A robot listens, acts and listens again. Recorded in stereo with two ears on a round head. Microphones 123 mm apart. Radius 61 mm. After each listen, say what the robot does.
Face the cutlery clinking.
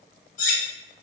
Turn 60° left.
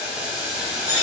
Turn 35° left.
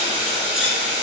Keep listening.
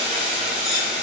Keep listening.
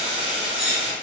Facing the cutlery clinking, under 1 m away.